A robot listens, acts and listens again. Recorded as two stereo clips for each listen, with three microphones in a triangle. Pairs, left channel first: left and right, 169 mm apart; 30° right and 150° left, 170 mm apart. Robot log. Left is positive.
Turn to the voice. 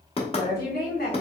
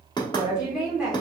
note: The woman speaking: 65° left.
cmd yaw +65
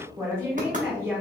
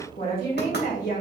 note: The woman speaking is now 15° right.
cmd yaw -15
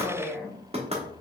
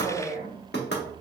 end: Facing the woman speaking.